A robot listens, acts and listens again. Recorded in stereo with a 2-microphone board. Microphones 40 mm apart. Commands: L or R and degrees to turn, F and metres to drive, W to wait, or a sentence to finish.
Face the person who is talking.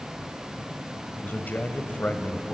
L45
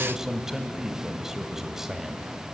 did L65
R10
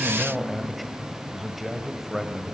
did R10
Facing the man speaking.